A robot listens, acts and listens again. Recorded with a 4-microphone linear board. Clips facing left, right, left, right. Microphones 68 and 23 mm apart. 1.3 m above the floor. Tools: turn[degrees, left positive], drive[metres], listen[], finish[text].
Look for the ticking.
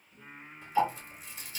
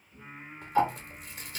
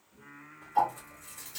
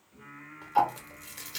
Thought: The ticking: about 55° right or 125° right.
Action: turn[-55]
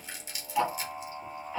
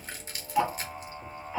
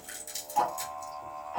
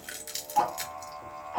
Thought: So it is at 20° right.
Action: turn[-20]
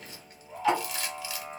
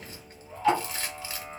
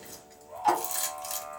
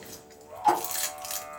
Action: finish[Found it: ticking, straight ahead, 1 to 2 m away.]